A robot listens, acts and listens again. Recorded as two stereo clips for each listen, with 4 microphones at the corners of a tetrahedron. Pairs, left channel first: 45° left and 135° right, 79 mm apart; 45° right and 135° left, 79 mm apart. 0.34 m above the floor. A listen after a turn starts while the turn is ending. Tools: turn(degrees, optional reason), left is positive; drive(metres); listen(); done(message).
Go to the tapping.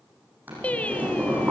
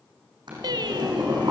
listen()
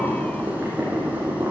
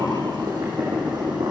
listen()
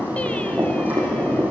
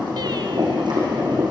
done("I can't make out tapping to turn to.")